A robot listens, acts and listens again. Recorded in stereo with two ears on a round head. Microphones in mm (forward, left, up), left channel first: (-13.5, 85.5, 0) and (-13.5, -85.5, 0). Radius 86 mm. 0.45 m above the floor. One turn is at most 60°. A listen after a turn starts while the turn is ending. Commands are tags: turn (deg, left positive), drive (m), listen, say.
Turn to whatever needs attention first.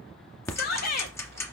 <turn deg="55"/>
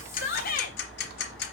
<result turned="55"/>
<turn deg="60"/>
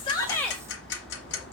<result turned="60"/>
<listen/>
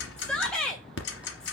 <say>Facing the shout.</say>